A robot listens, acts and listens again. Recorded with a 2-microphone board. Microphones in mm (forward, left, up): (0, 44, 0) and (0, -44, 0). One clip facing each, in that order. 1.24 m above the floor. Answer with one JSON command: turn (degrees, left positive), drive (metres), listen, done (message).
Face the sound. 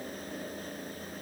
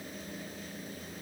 {"listen": true}
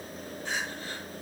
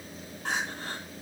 {"turn": -90}
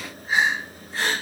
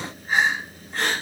{"done": "Facing the crying, over 4 m away."}